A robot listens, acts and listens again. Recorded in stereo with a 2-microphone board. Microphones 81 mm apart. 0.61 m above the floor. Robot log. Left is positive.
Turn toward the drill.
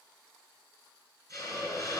cmd idle
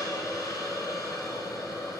cmd idle
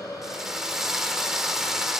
cmd yaw -30
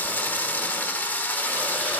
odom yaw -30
note: So it is at 25° left.
cmd yaw +25
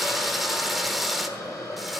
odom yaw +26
end: Found it: a drill, straight ahead.